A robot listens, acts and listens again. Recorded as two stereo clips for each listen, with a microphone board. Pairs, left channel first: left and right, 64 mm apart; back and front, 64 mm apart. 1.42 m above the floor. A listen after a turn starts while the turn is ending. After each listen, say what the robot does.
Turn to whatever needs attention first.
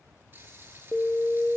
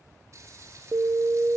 Turn 40° left.
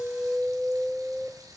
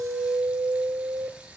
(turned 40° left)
Facing the alarm, 1 to 2 m away.